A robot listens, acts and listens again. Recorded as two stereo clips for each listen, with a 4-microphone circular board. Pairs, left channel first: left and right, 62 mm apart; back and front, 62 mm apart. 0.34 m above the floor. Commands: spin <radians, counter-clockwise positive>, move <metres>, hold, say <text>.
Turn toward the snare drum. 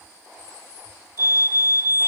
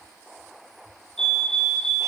hold
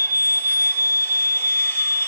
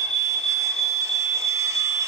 hold
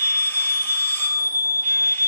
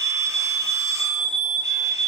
say I can't make out a snare drum, only a fire alarm.